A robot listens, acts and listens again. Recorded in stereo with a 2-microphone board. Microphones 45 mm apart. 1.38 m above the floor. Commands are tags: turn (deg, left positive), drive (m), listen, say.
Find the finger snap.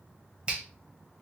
<turn deg="-25"/>
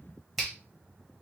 <say>Facing the finger snap, 1 to 2 m away.</say>